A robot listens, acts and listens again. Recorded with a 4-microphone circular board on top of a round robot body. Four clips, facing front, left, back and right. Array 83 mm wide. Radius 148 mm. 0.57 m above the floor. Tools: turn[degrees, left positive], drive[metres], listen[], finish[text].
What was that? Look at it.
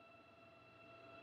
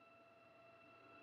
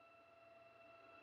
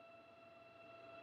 Action: listen[]
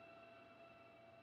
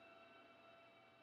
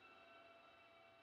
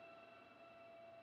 Action: listen[]
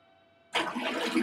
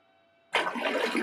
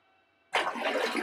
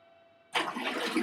Thought: The splash: 125° left.
Action: turn[125]
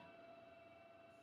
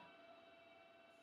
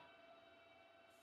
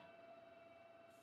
Action: finish[I heard a splash from this way, but can't make it out now.]